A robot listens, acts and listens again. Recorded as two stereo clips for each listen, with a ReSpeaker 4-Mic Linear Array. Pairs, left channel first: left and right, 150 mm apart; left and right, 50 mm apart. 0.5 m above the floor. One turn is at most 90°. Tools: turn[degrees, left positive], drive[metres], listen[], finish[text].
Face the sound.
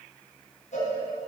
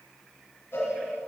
Thought: The cowbell: about 45° left or 135° left.
Action: turn[45]
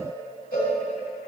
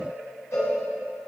Thought: So it is at 85° left.
Action: turn[85]
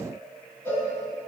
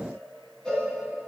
Thought: The cowbell is now 20° left.
Action: turn[20]
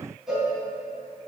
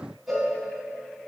Action: finish[Found it: a cowbell, straight ahead.]